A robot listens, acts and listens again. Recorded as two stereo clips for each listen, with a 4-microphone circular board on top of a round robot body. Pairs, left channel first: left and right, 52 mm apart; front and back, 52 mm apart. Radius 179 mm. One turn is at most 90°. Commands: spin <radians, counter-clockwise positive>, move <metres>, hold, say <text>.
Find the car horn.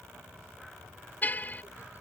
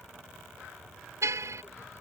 spin 1.57
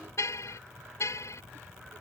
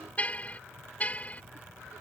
spin 1.13
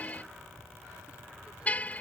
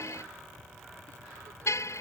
spin 0.52
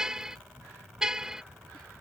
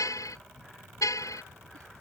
spin -0.17
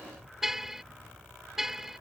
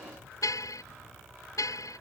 say Facing the car horn.